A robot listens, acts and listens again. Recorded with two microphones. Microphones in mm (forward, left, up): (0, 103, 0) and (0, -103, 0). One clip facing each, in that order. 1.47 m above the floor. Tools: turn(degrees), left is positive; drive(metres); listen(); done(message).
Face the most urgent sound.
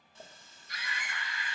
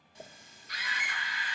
turn(degrees=-50)
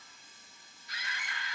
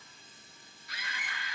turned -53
turn(degrees=-75)
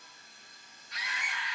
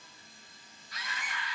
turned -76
done("Found it: a scream, straight ahead.")